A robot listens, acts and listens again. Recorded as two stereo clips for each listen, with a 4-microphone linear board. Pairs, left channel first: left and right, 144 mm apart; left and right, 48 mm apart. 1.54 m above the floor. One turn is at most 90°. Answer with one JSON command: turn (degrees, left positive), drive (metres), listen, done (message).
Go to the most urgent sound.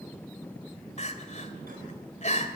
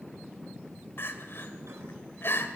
{"turn": 55}
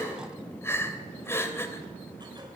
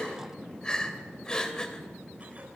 {"turn": 20}
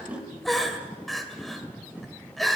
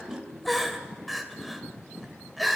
{"drive": 1.0}
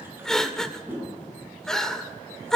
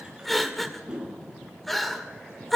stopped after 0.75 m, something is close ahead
{"done": "Arrived at the crying, straight ahead."}